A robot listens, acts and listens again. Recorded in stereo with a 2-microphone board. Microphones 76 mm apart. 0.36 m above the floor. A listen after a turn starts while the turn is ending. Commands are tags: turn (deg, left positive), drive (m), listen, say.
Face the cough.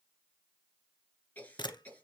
<turn deg="25"/>
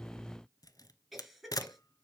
<say>Facing the cough, 2 to 4 m away.</say>